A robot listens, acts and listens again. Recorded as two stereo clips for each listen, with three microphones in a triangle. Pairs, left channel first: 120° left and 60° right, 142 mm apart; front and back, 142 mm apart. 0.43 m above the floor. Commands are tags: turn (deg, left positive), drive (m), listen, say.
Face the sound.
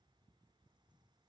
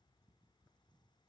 <listen/>
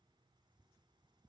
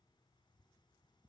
<listen/>
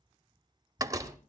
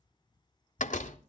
<say>Found it: a door slam, straight ahead.</say>